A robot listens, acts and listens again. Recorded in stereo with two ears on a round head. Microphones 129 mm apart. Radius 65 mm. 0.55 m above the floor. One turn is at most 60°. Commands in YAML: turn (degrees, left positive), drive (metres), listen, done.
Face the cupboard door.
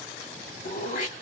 listen: true
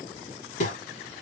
listen: true
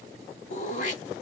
done: "I can't make out a cupboard door to turn to."